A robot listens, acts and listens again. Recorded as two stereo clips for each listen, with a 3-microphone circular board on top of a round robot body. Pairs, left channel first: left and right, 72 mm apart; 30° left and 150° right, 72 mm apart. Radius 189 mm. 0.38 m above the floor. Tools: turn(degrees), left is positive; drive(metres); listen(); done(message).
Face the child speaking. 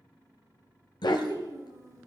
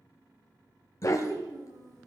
turn(degrees=-125)
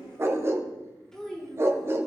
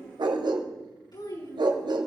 turn(degrees=10)
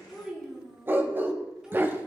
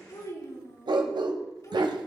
done("Found it: a child speaking, straight ahead, over 4 m away.")